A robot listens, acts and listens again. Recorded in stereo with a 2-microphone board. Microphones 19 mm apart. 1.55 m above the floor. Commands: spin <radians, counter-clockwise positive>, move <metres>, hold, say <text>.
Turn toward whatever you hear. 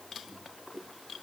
hold
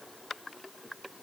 hold
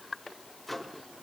spin 0.52
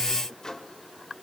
spin 2.53
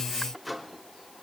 say Found it: a microwave, straight ahead, 2 to 4 m away.